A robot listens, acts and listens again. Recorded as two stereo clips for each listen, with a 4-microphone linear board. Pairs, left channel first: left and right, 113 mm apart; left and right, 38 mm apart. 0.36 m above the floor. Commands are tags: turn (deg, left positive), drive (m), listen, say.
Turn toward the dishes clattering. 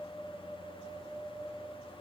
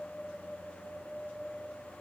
<listen/>
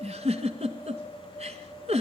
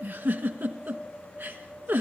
<listen/>
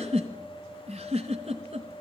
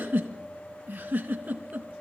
<say>I can't make out dishes clattering, only a giggle.</say>